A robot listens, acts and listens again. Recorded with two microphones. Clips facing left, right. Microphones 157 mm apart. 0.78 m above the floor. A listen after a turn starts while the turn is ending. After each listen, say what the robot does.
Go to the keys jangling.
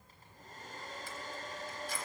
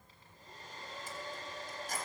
Turn 45° right.
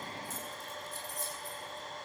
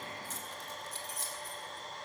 Turn 90° right.
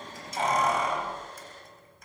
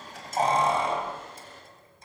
Turn 30° right.
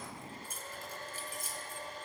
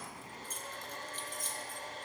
Turn 10° left.
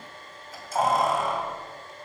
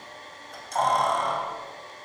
Drive 1.0 m forward.
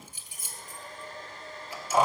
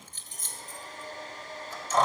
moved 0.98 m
Turn 10° left.
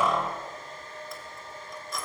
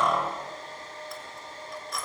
Drive 1.0 m forward.
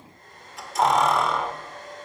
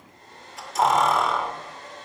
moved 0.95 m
Drive 1.0 m forward.
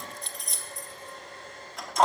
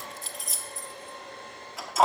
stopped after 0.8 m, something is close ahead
I am next to the keys jangling.